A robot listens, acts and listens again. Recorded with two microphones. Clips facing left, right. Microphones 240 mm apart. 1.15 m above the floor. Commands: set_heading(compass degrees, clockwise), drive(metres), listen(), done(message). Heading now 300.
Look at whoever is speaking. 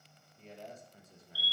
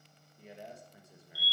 set_heading(330)
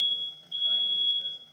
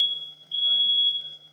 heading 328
listen()
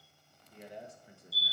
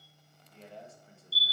set_heading(313)
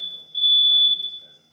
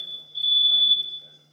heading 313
listen()
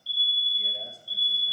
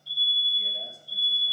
listen()
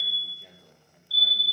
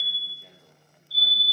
done("Found it: a man speaking, straight ahead, 1 to 2 m away.")